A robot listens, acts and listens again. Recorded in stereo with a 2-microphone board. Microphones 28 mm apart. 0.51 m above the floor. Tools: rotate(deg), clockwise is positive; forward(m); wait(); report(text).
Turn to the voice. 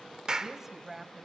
rotate(30)
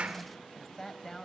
rotate(-15)
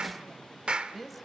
report("Facing the woman speaking.")